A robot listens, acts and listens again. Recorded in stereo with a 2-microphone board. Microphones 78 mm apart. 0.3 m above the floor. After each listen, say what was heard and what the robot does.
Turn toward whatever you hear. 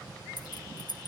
The keys jangling: about 60° left or 120° left. Turn 60° left.
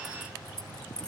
So it is at 10° left. Turn 10° left.
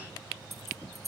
Facing the keys jangling.